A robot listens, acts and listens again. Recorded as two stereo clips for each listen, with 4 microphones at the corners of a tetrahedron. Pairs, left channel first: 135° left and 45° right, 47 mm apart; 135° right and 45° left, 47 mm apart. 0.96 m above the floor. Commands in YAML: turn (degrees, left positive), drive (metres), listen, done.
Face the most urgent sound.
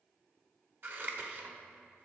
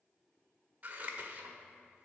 listen: true
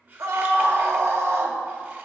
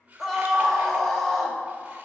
turn: -50
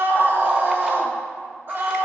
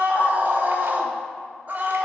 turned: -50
done: "Facing the scream."